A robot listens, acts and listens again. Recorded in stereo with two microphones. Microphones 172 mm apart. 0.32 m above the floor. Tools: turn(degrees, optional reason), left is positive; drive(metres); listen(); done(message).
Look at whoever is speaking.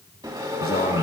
turn(degrees=55, reason="The man speaking: about 55° left or 125° left.")
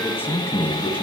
turn(degrees=15, reason="So it is at 15° left.")
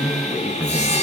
done("Facing the man speaking, 1 to 2 m away.")